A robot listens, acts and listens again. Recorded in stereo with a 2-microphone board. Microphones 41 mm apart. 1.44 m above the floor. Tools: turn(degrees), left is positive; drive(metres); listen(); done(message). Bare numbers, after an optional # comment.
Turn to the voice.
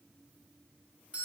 listen()
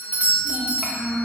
turn(-30)
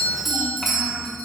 turn(-30)
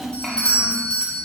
turn(30)
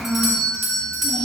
# So it is at 55° right.
turn(-55)
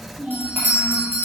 done("Facing the child speaking.")